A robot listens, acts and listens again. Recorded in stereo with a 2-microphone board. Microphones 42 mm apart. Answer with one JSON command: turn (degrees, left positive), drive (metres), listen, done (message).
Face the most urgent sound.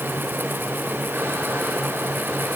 {"listen": true}
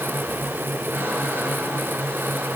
{"listen": true}
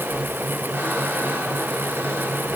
{"done": "I can't make out anything urgent to turn to."}